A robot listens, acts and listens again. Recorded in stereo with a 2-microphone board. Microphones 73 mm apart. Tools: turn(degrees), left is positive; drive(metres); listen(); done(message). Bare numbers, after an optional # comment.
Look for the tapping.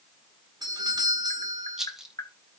# The tapping: about 65° left or 115° left.
turn(65)
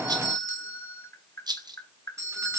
# So it is at 45° left.
turn(45)
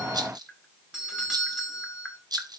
# The tapping is now 10° left.
turn(10)
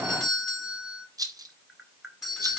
done("Facing the tapping.")